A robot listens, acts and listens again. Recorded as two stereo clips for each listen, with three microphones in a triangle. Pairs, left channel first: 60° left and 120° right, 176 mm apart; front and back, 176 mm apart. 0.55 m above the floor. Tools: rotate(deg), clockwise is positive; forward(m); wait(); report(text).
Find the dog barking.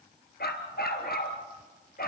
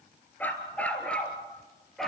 rotate(-90)
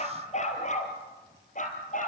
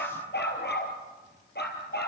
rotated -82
rotate(-20)
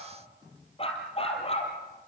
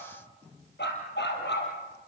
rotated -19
report("Facing the dog barking, over 4 m away.")